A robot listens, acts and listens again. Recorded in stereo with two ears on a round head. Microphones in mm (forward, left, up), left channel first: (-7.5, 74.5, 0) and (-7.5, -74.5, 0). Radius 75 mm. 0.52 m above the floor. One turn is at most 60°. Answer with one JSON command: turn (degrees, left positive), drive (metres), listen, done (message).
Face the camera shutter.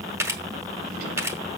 {"turn": -20}
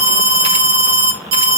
{"listen": true}
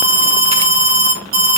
{"listen": true}
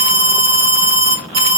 {"done": "I heard a camera shutter, but can't make it out now. It was about straight ahead or 140° right."}